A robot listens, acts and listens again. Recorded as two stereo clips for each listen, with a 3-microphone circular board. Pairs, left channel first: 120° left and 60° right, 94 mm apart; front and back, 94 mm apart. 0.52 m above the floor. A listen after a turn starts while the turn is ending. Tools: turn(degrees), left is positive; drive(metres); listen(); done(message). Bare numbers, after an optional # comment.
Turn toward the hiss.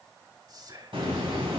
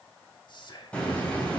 # The hiss: 75° right.
turn(-75)
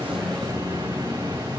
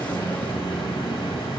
# The hiss is now 20° right.
turn(-20)
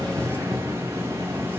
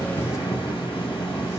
done("Facing the hiss, 2 to 4 m away.")